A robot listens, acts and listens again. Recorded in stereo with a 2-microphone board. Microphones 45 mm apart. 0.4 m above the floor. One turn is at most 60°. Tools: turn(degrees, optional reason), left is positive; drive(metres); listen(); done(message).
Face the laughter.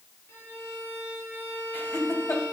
turn(degrees=55, reason="The laughter: about 55° left or 125° left.")
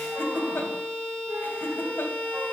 turn(degrees=60, reason="So it is at 60° left.")
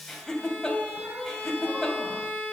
turn(degrees=10, reason="The laughter is now 10° left.")
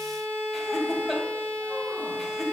done("Found it: laughter, straight ahead.")